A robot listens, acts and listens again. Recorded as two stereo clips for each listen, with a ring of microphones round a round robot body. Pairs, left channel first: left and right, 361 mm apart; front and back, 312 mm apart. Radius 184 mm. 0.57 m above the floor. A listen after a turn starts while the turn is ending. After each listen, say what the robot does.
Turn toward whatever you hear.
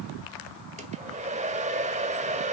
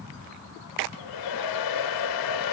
Turn 20° right.
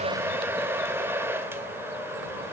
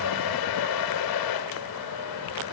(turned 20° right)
Found it: a hair dryer, straight ahead, 1 to 2 m away.